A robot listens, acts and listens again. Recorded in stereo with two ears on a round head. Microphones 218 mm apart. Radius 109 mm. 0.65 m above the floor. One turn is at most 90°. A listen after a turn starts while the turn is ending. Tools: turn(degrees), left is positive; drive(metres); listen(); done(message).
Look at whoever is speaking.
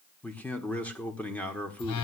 turn(degrees=30)
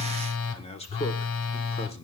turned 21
turn(degrees=90)
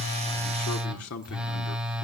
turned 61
turn(degrees=90)
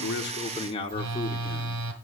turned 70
turn(degrees=25)
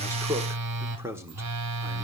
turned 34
turn(degrees=-10)
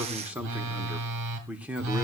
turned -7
done("Found it: a man speaking, straight ahead.")